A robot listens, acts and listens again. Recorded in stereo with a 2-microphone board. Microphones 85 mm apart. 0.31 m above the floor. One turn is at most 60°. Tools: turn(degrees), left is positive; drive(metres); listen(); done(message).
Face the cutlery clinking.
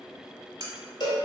turn(degrees=-50)
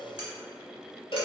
listen()
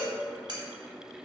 turn(degrees=-60)
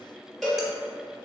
turn(degrees=-10)
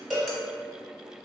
listen()
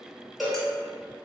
done("I heard cutlery clinking from this way, but can't make it out now.")